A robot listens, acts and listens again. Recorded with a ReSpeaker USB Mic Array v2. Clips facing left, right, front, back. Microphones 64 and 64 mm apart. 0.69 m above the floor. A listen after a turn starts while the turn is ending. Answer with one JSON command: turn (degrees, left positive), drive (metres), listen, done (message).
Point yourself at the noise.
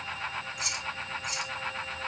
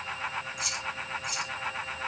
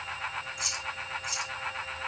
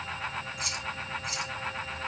{"turn": 130}
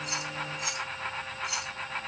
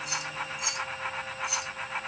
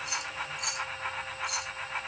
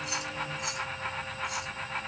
{"turn": -10}
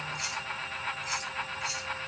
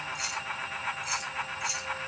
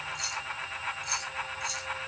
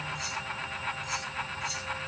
{"done": "Facing the keys jangling."}